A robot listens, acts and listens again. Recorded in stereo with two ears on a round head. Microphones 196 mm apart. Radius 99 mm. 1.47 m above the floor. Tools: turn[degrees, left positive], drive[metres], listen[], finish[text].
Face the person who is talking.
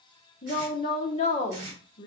Thought: The woman speaking: about 30° left or 150° left.
Action: turn[30]
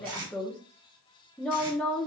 Action: finish[Facing the woman speaking.]